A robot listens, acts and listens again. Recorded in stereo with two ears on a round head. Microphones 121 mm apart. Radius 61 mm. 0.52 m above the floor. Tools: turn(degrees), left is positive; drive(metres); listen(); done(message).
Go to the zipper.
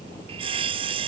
listen()
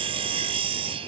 listen()
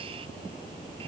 done("I can't make out a zipper to turn to.")